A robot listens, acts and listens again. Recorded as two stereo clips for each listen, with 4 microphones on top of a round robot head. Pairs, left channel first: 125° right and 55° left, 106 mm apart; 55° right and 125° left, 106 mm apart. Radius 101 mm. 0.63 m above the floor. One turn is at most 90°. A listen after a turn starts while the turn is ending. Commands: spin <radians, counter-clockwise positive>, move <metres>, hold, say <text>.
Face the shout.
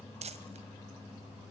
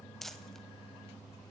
hold
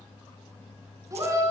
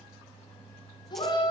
say Facing the shout.